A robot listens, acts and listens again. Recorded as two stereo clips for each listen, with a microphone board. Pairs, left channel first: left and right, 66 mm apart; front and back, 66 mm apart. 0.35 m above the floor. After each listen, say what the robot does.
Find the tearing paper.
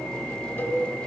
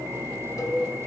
Keep listening.
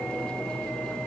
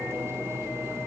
Keep listening.
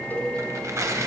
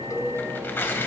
Turn 55° right.
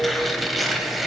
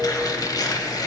Facing the tearing paper.